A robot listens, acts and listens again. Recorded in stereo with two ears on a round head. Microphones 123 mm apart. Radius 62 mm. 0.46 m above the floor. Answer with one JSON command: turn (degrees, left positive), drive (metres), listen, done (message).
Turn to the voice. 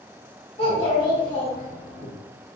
{"turn": 30}
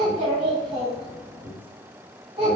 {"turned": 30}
{"turn": -15}
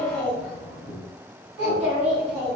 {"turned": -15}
{"done": "Found it: a child speaking, straight ahead, 2 to 4 m away."}